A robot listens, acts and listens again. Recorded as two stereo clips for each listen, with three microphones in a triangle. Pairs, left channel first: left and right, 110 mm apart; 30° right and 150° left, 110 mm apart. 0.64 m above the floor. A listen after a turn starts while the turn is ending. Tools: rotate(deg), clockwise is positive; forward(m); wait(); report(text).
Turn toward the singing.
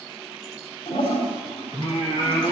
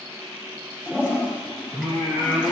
rotate(-115)
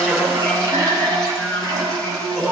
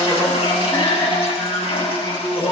rotate(-10)
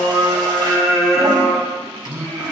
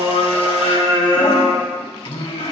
report("Found it: singing, straight ahead, over 4 m away.")